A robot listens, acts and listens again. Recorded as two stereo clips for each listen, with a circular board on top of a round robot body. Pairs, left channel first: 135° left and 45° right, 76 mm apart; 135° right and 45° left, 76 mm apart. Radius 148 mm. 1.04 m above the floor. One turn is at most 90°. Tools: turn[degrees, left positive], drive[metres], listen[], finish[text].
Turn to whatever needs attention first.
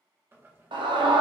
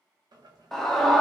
Thought: The scream: 50° right.
Action: turn[-50]
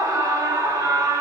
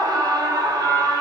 Action: finish[Facing the scream.]